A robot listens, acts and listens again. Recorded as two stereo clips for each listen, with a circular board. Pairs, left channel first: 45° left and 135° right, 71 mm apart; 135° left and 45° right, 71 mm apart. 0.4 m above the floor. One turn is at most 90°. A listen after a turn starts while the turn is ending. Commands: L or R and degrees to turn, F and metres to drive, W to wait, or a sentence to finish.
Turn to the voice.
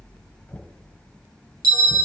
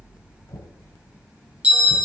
W
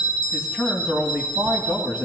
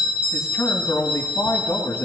L90
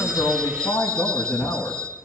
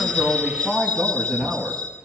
L50
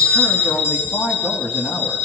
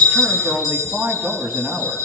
L20
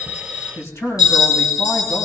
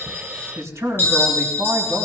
Found it: a man speaking, straight ahead.